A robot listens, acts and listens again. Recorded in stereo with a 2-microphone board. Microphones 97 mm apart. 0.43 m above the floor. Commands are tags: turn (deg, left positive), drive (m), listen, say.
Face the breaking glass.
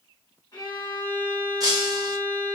<turn deg="-40"/>
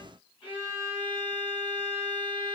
<listen/>
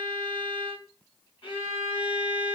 <say>I heard breaking glass, but can't make it out now. It was about straight ahead or 100° right.</say>